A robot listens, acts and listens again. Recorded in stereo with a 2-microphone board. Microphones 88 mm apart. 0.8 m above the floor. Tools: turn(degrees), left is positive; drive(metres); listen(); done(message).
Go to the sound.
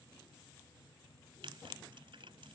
turn(degrees=-90)
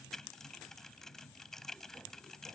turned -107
drive(metres=1.0)
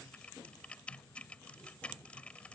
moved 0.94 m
turn(degrees=15)
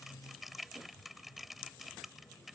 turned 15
drive(metres=1.0)
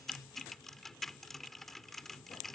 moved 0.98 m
drive(metres=1.0)
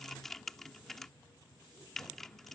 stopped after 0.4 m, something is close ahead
done("Arrived at the typing on a keyboard, straight ahead.")